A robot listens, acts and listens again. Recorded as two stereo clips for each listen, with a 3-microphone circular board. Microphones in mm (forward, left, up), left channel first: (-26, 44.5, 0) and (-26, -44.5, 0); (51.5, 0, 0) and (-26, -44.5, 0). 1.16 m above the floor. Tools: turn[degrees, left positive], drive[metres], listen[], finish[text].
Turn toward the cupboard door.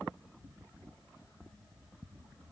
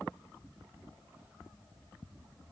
Action: listen[]
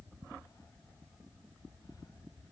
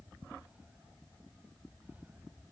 Action: listen[]
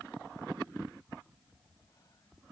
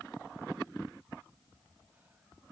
Action: finish[I can't make out a cupboard door.]